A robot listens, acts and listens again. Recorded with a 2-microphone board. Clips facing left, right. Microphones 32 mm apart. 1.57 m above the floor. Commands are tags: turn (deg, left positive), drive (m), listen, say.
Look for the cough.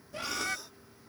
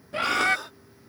<turn deg="-55"/>
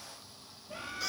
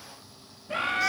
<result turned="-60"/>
<listen/>
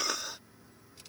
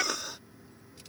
<say>Found it: a cough, straight ahead.</say>